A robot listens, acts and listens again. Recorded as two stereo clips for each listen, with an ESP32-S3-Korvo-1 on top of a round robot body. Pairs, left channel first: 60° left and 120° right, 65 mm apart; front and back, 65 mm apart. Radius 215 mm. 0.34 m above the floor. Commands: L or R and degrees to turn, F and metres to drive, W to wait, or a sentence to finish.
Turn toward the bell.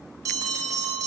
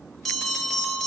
R85
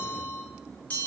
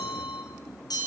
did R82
Facing the bell.